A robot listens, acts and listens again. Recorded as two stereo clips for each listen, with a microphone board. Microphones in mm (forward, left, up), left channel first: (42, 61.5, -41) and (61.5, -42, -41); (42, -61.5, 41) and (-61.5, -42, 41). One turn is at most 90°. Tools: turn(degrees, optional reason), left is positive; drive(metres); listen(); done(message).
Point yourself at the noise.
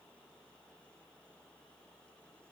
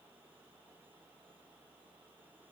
listen()
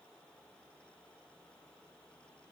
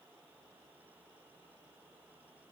listen()
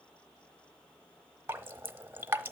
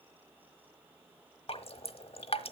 turn(degrees=-10, reason="The dripping: 10° right.")
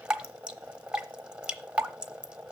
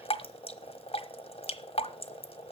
done("Found it: dripping, straight ahead.")